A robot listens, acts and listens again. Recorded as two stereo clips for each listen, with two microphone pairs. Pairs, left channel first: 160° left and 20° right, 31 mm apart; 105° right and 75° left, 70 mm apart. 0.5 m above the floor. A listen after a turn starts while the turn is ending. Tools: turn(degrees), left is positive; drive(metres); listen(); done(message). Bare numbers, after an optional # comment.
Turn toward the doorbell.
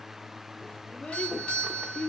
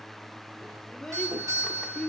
# The doorbell: 105° left.
turn(105)
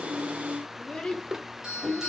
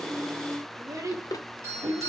# The doorbell is now 30° left.
turn(30)
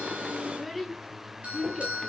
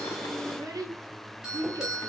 done("Facing the doorbell.")